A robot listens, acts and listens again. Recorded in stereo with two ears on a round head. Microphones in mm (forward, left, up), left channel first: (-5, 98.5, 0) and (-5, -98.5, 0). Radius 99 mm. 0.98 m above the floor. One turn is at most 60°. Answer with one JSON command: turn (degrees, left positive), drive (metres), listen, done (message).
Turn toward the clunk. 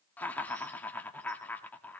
{"listen": true}
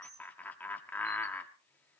{"listen": true}
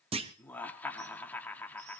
{"turn": -25}
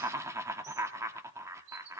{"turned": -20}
{"listen": true}
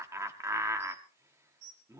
{"done": "I heard a clunk, but can't make it out now. It was about 5° right or 135° right."}